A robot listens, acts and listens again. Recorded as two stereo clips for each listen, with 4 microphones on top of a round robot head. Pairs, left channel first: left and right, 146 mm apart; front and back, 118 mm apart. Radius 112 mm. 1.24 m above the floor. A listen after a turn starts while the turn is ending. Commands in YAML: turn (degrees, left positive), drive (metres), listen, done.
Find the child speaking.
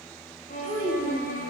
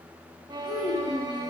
turn: -85
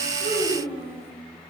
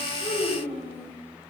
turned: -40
turn: -40
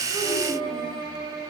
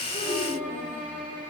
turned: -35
listen: true
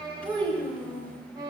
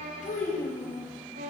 turn: 15
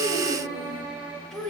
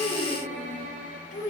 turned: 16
done: "Found it: a child speaking, straight ahead, over 4 m away."